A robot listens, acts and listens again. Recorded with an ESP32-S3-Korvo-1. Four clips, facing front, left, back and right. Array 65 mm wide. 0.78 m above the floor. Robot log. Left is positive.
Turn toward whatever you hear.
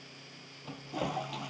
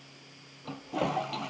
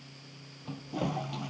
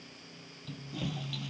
note: The toilet flushing: 85° left.
cmd yaw +85
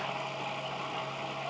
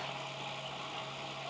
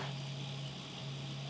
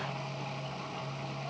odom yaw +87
end: Found it: a toilet flushing, straight ahead.